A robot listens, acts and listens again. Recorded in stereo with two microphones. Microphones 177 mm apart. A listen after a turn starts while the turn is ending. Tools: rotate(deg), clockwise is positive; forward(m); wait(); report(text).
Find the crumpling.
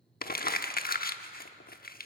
rotate(-55)
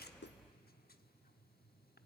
wait()
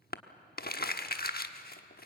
rotate(-60)
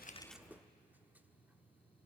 wait()
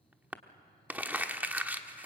rotate(10)
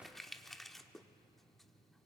report("Found it: crumpling, straight ahead, 1 to 2 m away.")